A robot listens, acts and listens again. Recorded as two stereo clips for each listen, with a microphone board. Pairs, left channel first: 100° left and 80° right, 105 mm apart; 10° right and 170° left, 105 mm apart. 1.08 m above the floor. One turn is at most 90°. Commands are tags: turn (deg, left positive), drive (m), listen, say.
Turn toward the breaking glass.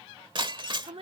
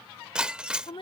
<turn deg="-90"/>
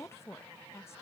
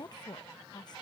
<turn deg="-20"/>
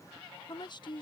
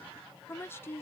<say>Facing where the breaking glass came from. I can't hear it now.</say>